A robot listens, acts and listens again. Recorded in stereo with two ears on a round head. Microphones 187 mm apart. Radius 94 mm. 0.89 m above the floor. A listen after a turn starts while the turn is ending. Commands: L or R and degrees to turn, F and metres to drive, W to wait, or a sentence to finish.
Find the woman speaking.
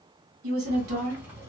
R70
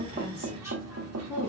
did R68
R15
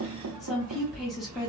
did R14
Found it: a woman speaking, straight ahead.